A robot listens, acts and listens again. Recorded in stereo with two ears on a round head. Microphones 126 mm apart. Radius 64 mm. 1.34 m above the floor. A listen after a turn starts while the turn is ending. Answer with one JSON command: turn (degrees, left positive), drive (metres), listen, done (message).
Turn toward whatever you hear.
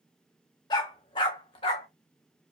{"turn": 40}
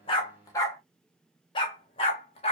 {"turn": 45}
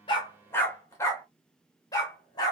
{"turn": 30}
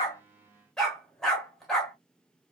{"done": "Found it: a dog barking, straight ahead."}